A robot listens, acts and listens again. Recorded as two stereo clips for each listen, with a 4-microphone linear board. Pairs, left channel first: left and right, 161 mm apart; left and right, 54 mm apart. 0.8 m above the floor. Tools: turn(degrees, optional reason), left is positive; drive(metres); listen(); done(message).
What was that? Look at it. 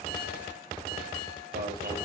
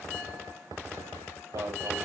turn(degrees=-90)
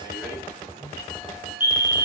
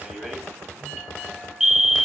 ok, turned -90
turn(degrees=-15, reason="So it is at 15° right.")
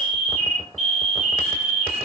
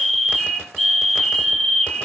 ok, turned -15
done("Facing the alarm, 2 to 4 m away.")